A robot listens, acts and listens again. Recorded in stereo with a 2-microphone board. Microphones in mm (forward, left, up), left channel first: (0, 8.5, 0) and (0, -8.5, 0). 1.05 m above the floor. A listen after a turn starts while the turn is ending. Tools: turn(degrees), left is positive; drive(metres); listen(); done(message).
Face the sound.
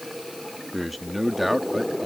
turn(degrees=-30)
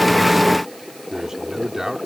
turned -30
turn(degrees=-145)
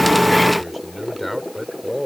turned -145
turn(degrees=10)
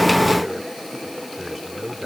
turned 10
done("Facing the man speaking.")